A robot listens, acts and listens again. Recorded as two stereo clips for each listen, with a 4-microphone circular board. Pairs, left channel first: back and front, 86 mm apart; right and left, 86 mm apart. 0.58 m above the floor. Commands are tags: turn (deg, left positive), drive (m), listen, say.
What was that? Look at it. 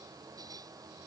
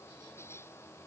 <listen/>
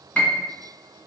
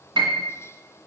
<turn deg="105"/>
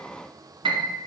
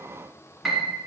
<say>Facing the piano, 1 to 2 m away.</say>